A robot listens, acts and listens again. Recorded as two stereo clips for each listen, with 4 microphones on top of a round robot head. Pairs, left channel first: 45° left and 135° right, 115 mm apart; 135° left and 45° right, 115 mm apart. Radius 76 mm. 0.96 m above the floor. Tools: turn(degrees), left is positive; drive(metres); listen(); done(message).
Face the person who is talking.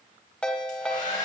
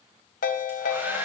listen()
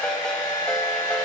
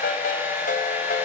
listen()
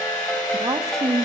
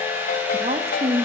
turn(degrees=-75)
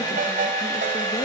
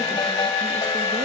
listen()
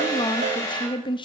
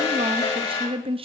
done("Found it: a woman speaking, straight ahead, 1 to 2 m away.")